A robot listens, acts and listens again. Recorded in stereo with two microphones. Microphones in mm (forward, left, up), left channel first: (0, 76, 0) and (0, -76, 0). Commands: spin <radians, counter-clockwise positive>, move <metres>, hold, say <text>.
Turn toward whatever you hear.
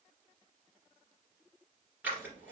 spin -0.52
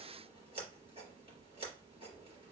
spin -2.44
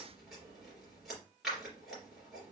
say Found it: scissors, straight ahead.